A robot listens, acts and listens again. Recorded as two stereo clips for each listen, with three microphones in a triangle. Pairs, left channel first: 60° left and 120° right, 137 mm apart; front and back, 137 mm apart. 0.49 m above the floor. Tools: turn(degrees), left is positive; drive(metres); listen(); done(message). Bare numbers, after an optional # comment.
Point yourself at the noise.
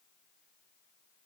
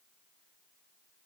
listen()
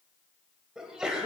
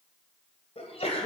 # The sneeze: 35° right.
turn(-35)
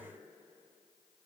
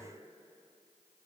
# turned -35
done("Facing where the sneeze came from. I can't hear it now.")